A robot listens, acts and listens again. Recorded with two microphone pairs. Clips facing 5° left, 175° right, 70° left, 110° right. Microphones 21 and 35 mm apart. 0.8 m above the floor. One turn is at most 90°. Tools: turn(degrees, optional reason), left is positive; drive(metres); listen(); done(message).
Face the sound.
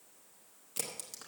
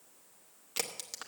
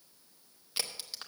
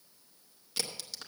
turn(degrees=90, reason="The crack: 135° left.")
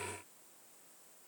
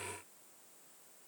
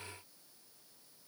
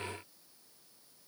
turn(degrees=45, reason="Nothing new. It was at 45° left.")
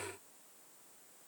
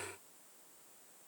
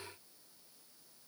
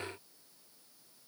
done("Facing where the crack came from. I can't hear it now.")